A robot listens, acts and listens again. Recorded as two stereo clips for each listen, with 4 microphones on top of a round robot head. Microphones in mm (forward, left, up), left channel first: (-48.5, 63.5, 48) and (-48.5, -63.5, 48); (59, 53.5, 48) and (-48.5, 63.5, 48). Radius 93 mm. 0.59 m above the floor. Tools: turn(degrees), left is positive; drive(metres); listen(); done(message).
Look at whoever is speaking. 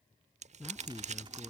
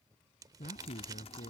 done("Found it: a man speaking, straight ahead.")